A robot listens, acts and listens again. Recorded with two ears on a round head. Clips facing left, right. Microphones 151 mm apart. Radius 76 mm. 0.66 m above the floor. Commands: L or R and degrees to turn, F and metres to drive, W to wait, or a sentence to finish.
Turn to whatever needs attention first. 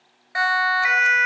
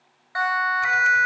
L25
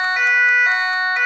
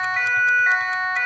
L130
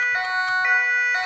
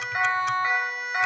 L30
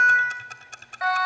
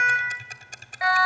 R10
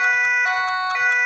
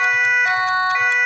Found it: a siren, straight ahead.